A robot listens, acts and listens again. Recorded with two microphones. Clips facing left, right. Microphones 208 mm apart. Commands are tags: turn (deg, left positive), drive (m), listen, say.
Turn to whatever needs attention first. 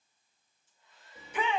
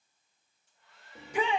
<turn deg="-40"/>
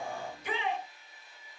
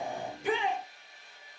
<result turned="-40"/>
<turn deg="-100"/>
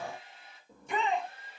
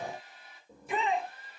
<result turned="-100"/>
<say>Facing the shout.</say>